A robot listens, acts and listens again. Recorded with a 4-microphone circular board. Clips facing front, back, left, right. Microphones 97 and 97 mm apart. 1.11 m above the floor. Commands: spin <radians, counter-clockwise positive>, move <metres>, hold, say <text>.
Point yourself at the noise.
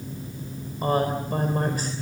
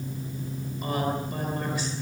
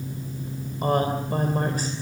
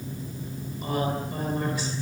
spin 0.79
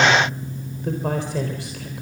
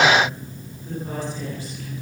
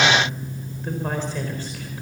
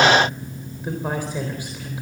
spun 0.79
spin -0.17
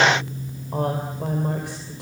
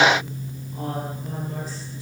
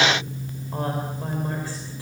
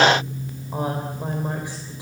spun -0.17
spin -0.26
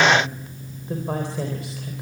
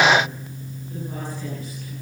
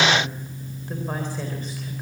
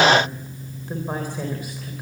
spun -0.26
hold
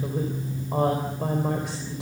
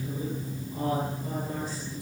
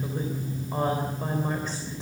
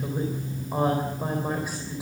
spin -0.17
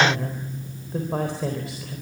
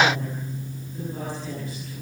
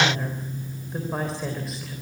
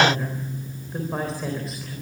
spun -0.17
say Facing the woman speaking.